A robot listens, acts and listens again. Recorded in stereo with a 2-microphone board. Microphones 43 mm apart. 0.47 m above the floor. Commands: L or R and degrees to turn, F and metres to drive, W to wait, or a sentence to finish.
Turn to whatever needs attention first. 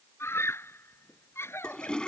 L90
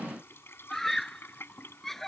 Found it: a scream, straight ahead.